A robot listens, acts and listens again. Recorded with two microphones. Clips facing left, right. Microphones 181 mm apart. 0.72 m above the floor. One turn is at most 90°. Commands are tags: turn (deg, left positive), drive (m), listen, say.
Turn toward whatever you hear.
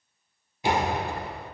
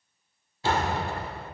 <turn deg="15"/>
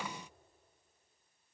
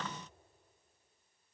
<listen/>
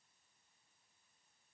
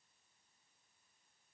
<say>I heard a door slam, but can't make it out now. It was about straight ahead or 150° left.</say>